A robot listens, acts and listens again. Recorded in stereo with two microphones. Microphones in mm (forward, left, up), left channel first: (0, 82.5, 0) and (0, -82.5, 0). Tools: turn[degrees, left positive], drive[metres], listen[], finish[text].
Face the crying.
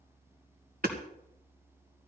Action: listen[]
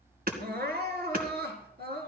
Action: turn[-90]
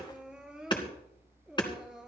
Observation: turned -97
Action: finish[Facing the crying.]